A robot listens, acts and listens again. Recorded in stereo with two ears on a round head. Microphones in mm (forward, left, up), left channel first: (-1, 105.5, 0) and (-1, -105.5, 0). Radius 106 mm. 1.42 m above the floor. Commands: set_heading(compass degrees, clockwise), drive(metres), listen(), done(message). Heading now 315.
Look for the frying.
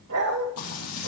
set_heading(240)
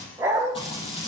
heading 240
set_heading(215)
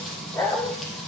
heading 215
done("Facing the frying.")